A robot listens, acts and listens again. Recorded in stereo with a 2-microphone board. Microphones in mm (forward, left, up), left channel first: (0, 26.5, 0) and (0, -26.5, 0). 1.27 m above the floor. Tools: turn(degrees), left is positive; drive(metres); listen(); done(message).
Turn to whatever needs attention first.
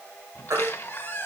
turn(degrees=-70)
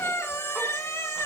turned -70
listen()
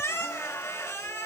listen()
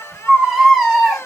done("Facing the baby crying.")